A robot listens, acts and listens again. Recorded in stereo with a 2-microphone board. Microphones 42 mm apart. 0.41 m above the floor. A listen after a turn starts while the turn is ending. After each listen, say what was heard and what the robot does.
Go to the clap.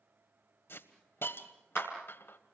The clap: about 25° right or 155° right. Turn 25° right.
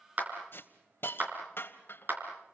So it is at 130° right. Turn 130° right.
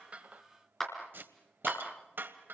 The clap is now 10° left. Turn 10° left.
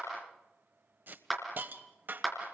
Drive 1.0 m forward.
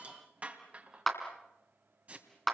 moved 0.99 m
Drive 1.0 m forward.
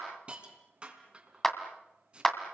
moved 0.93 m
The clap is now 10° left. Turn 10° left.
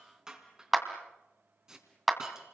Drive 1.0 m forward.
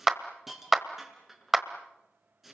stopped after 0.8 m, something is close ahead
The clap is now 10° right. Turn 10° right.
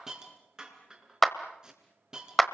Arrived at the clap, straight ahead.